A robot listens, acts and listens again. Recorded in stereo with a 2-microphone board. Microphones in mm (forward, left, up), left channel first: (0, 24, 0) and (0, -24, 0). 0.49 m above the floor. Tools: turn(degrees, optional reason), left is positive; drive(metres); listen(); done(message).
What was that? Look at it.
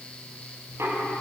turn(degrees=-65, reason="The knocking: about 65° right or 115° right.")
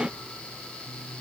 done("Facing the knocking, over 4 m away.")